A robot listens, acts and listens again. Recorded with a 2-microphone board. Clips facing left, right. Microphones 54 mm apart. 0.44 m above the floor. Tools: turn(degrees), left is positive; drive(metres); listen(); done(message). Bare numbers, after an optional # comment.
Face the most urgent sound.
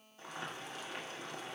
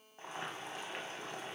listen()
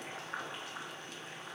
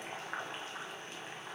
listen()
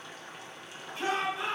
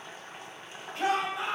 # The shout: about 65° right or 115° right.
turn(-65)
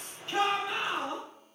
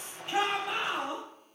# So it is at 20° right.
turn(-20)
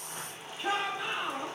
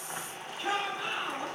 done("Facing the shout, 2 to 4 m away.")